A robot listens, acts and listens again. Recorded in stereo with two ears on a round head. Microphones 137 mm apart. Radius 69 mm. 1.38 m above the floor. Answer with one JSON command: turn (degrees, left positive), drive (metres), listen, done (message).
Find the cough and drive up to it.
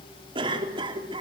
{"turn": -35}
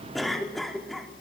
{"drive": 1.0}
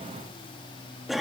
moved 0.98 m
{"drive": 1.0}
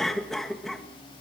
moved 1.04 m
{"drive": 1.0}
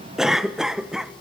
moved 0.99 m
{"drive": 1.0}
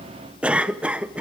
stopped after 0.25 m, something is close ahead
{"turn": -10}
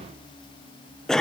{"done": "Arrived at the cough, straight ahead."}